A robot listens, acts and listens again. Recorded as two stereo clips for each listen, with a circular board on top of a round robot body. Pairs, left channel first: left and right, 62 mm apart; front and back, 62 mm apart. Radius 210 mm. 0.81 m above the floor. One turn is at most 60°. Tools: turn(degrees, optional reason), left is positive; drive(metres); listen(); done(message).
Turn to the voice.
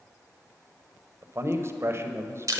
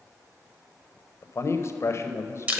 turn(degrees=-45, reason="The man speaking: 45° right.")
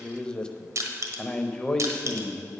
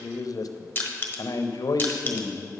turn(degrees=15, reason="The man speaking is now 15° left.")
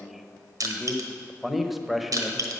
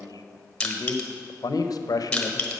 done("Found it: a man speaking, straight ahead.")